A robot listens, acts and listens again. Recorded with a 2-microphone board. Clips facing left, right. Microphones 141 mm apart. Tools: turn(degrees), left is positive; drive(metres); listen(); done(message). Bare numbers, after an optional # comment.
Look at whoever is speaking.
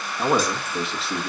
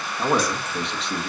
turn(30)
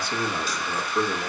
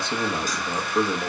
# So it is at 25° right.
turn(-25)
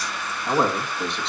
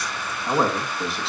done("Found it: a man speaking, straight ahead, 1 to 2 m away.")